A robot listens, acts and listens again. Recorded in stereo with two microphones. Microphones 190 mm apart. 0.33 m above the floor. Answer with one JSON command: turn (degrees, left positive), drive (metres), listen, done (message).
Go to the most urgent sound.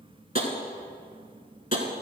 {"listen": true}
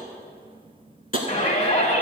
{"turn": 40}
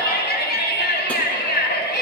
{"turn": 90}
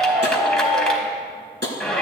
{"drive": 1.0}
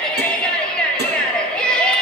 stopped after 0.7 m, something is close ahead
{"done": "Arrived at the shout, straight ahead."}